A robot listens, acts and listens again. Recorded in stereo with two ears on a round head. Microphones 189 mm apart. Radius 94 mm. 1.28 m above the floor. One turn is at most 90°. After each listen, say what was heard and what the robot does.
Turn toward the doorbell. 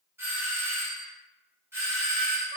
Turn 30° right.
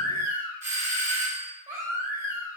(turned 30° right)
So it is at 140° right. Turn 90° right.
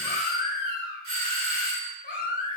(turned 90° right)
The doorbell is now 55° right. Turn 55° right.
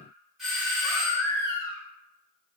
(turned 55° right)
Found it: a doorbell, straight ahead.